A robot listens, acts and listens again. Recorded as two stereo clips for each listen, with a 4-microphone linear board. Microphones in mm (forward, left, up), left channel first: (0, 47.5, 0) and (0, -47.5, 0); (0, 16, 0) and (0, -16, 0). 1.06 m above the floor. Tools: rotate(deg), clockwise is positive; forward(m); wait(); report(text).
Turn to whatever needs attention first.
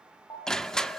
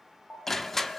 rotate(-45)
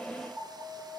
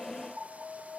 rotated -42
report("Facing the alarm, over 4 m away.")